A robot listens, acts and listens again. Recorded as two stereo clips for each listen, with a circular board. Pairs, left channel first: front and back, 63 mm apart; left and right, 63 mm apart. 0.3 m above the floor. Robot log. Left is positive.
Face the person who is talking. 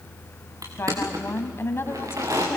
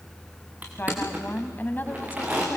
note: The woman speaking: 40° left.
cmd yaw +40
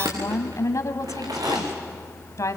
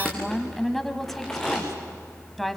end: Found it: a woman speaking, straight ahead, 1 to 2 m away.